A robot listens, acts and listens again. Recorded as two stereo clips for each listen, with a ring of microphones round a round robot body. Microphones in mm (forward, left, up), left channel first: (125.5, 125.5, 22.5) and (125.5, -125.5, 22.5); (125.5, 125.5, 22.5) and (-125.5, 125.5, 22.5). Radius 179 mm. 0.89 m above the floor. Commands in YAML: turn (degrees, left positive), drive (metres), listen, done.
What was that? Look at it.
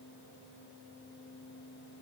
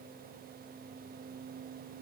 listen: true
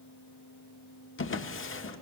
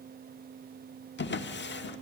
turn: 50
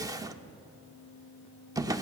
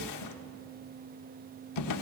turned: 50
turn: -15
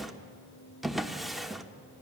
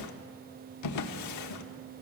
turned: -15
done: "Found it: a drawer, straight ahead, 1 to 2 m away."